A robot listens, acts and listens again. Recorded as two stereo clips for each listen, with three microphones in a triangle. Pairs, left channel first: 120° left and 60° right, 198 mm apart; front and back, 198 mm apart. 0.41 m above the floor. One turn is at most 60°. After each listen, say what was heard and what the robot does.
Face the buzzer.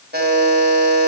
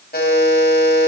The buzzer: 35° right. Turn 35° right.
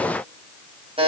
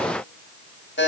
Found it: a buzzer, straight ahead.